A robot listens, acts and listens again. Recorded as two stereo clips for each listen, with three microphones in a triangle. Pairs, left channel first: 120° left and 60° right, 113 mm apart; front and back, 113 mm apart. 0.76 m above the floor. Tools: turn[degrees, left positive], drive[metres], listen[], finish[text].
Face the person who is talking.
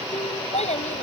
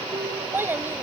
Thought: The child speaking: 110° left.
Action: turn[110]
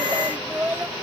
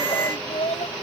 Thought: The child speaking is now 10° left.
Action: turn[10]
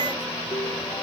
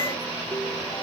Action: listen[]
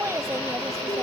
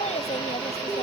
Action: finish[Facing the child speaking.]